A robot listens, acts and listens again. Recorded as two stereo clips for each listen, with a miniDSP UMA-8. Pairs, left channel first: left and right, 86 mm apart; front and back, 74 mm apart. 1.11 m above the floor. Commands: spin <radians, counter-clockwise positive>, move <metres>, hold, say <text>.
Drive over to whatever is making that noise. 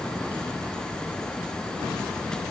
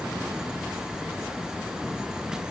hold
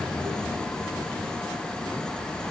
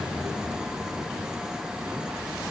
hold
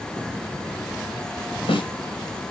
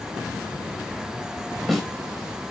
spin 1.57
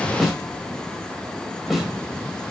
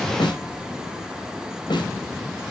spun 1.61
move 1.0
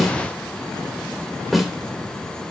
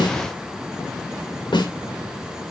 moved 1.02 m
move 1.0
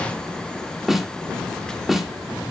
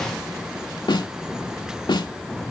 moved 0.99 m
move 1.0
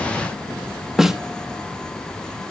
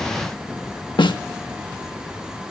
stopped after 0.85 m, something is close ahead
say Arrived at the snare drum, straight ahead.